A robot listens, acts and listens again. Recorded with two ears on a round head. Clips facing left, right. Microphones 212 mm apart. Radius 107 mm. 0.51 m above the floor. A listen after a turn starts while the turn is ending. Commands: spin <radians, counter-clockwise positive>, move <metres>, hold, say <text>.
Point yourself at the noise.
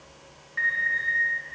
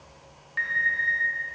spin -0.87
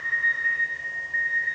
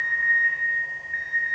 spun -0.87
spin -1.22
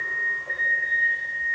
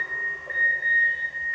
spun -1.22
spin -0.17
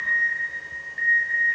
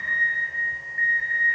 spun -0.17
say Found it: an alarm, straight ahead.